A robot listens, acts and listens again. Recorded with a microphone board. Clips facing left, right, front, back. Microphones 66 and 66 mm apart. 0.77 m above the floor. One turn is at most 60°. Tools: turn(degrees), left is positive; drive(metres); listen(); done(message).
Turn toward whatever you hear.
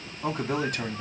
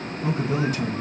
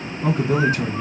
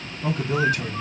turn(degrees=55)
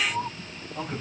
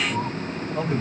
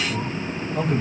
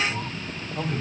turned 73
turn(degrees=-30)
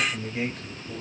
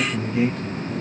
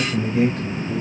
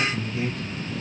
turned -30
done("Facing the man speaking.")